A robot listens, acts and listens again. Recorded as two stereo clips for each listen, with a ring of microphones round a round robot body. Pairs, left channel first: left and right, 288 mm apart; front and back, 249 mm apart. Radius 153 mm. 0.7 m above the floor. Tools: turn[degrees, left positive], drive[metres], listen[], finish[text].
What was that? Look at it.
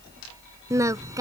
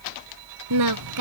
Thought: The singing: 170° right.
Action: turn[-170]
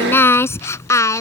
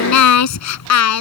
Thought: The singing is now 10° left.
Action: turn[10]
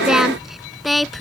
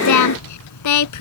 Action: finish[Found it: singing, straight ahead.]